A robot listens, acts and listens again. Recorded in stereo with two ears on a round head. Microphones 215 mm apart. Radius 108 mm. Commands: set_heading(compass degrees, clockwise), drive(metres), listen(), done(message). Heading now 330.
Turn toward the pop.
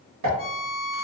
set_heading(60)
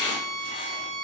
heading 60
done("I heard a pop from this way, but can't make it out now.")